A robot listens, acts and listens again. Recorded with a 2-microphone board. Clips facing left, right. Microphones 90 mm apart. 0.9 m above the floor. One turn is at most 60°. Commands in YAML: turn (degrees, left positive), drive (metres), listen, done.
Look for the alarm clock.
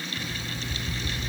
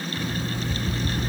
turn: -50
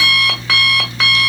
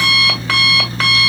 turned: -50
done: "Found it: an alarm clock, straight ahead."